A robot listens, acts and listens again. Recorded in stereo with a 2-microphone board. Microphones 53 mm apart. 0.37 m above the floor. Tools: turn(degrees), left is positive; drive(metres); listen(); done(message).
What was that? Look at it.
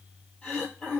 turn(degrees=30)
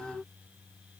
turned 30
listen()
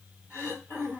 turn(degrees=140)
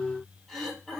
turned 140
turn(degrees=15)
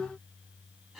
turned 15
done("Found it: throat clearing, straight ahead, 2 to 4 m away.")